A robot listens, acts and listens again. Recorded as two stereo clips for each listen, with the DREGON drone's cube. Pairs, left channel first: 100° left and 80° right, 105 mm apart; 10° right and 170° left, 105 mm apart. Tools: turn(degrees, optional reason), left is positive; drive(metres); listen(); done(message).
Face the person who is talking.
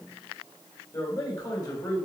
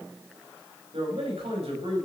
turn(degrees=150, reason="The man speaking: 150° left.")
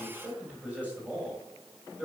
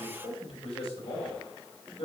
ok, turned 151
done("Found it: a man speaking, straight ahead.")